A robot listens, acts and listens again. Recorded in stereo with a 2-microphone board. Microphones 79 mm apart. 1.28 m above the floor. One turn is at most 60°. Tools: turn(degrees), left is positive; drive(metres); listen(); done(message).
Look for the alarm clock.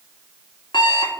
turn(degrees=60)
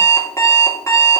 turn(degrees=40)
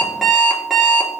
done("Facing the alarm clock.")